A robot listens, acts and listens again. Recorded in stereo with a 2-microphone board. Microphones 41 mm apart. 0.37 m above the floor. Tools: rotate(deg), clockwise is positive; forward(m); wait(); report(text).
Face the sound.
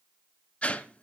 rotate(-30)
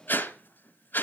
rotate(-115)
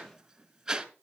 rotate(20)
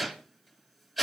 report("Found it: a whoosh, straight ahead.")